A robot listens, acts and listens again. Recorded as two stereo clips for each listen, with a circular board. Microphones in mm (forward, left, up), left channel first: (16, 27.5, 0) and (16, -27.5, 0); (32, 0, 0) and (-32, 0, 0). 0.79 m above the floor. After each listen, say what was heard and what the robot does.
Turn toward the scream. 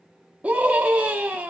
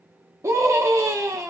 The scream: 150° right. Turn 150° right.
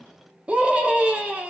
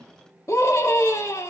The scream is now 25° right. Turn 25° right.
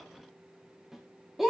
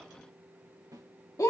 Found it: a scream, straight ahead.